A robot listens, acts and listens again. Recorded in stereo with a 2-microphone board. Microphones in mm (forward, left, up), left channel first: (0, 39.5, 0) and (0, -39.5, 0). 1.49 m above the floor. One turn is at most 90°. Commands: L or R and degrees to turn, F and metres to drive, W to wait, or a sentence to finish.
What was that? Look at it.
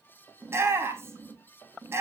R30
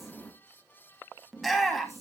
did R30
Found it: a shout, straight ahead.